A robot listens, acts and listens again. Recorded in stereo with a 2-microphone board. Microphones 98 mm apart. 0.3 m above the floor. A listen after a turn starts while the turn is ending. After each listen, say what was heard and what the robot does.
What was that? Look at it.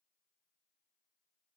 Keep listening.
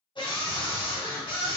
The scream: about 60° left or 120° left. Turn 60° left.
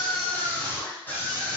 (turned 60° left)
So it is at 25° left. Turn 25° left.
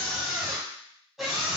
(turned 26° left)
Found it: a scream, straight ahead, 2 to 4 m away.